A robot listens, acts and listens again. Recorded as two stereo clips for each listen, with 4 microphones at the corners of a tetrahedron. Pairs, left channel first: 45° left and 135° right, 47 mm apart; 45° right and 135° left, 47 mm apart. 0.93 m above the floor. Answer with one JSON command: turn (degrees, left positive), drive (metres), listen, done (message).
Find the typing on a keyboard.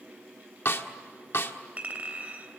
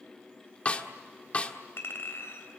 {"listen": true}
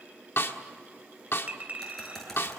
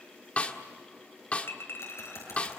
{"turn": -35}
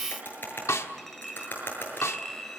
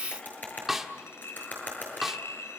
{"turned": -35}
{"done": "Facing the typing on a keyboard."}